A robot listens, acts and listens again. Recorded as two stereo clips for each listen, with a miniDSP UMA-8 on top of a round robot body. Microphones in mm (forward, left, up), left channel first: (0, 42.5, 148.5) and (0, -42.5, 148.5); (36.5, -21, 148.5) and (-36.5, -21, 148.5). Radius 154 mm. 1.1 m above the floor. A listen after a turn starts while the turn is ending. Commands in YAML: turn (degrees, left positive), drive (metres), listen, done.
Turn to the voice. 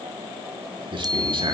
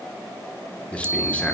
turn: -75
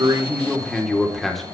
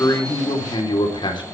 done: "Found it: a man speaking, straight ahead."